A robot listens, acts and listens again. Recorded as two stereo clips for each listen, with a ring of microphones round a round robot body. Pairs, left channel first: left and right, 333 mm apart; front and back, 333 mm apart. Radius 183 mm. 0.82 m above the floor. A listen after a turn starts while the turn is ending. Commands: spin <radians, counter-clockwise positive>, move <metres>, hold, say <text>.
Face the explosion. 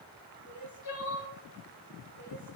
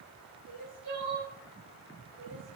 hold
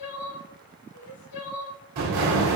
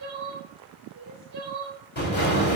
spin -1.05
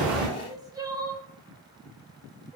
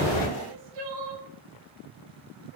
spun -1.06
say Facing where the explosion came from. I can't hear it now.